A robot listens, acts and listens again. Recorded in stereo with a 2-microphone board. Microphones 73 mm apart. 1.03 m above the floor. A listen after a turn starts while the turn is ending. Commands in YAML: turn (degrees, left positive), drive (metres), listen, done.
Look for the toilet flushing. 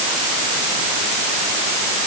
listen: true
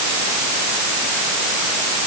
listen: true
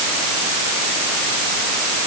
done: "I can't make out a toilet flushing to turn to."